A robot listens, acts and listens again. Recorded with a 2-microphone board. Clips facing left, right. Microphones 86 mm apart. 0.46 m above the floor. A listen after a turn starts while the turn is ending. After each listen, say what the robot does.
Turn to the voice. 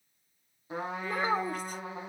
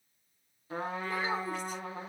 Turn 45° left.
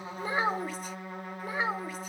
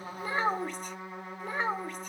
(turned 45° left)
Facing the child speaking, 1 to 2 m away.